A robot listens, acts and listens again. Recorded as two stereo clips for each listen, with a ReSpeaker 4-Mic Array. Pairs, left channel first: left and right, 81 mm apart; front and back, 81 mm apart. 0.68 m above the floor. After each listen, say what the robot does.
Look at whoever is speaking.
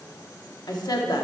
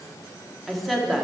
Turn 90° left.
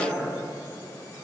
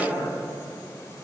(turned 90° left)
Turn 10° left.
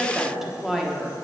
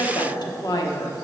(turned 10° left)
Found it: a woman speaking, straight ahead.